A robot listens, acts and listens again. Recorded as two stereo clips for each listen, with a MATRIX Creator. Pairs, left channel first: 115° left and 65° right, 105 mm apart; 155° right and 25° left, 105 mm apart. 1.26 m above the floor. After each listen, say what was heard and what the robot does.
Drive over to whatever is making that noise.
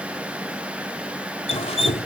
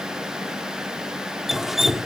The dripping: 110° left. Turn 110° left.
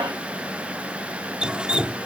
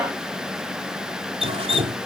The dripping is now 15° left. Turn 15° left.
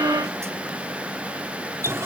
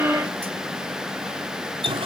Drive 1.0 m forward.
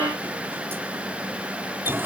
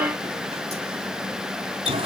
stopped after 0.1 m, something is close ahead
Something is in my way. I am facing the dripping but have not reached it.